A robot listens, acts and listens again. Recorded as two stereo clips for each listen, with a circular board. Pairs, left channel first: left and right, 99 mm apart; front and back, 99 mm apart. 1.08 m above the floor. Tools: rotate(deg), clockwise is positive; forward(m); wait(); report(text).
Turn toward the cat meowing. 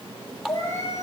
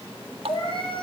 rotate(-30)
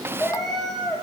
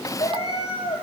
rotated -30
report("Facing the cat meowing, over 4 m away.")